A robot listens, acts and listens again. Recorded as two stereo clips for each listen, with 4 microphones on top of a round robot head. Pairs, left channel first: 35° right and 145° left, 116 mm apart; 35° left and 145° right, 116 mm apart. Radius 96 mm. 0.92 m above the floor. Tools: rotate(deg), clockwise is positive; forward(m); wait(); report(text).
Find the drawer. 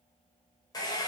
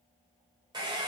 wait()
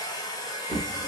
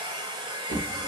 rotate(140)
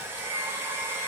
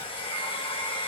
wait()
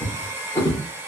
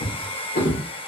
rotate(-30)
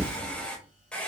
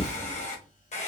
report("Found it: a drawer, straight ahead, under 1 m away.")